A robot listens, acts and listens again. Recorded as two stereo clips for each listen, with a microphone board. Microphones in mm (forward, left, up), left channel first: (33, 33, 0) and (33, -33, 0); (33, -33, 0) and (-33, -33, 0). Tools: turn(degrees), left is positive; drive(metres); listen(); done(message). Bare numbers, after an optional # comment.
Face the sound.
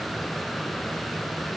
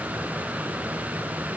listen()
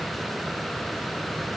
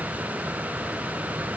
listen()
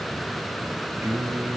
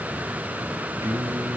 # The singing: 145° right.
turn(-145)
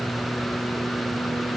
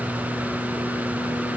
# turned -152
# The singing is now 20° left.
turn(20)
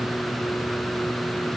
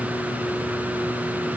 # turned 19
listen()
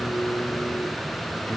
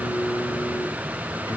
# The singing is now 10° left.
turn(10)
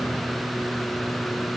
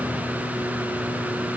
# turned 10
done("Facing the singing.")